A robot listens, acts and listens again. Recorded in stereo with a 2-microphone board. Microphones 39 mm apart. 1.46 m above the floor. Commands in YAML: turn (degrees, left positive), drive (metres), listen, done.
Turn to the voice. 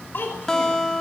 turn: 60
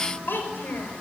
turn: 60
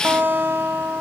listen: true
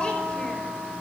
listen: true
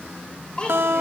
turn: 25
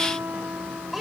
done: "Facing the child speaking."